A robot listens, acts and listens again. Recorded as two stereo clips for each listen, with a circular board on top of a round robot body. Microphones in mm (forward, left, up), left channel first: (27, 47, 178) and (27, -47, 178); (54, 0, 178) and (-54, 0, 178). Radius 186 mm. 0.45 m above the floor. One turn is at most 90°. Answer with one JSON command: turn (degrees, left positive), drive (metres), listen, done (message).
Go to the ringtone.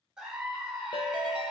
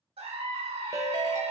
{"turn": 90}
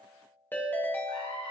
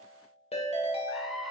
{"turn": 20}
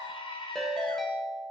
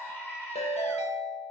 {"drive": 1.0}
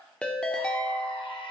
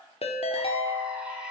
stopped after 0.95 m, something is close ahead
{"turn": 10}
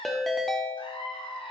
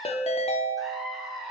{"done": "Arrived at the ringtone, straight ahead."}